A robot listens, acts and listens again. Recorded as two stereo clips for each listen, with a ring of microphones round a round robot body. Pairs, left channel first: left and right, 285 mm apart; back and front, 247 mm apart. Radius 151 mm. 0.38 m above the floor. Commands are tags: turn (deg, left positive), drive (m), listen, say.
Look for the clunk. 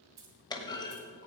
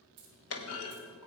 <turn deg="165"/>
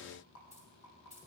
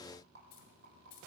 <say>Facing where the clunk came from. I can't hear it now.</say>